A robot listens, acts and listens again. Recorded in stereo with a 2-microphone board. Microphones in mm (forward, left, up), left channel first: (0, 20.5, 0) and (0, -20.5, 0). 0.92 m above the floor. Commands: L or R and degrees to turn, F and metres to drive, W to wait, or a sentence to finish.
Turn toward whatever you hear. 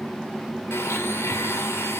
L90
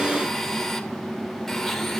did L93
Found it: a blender, straight ahead.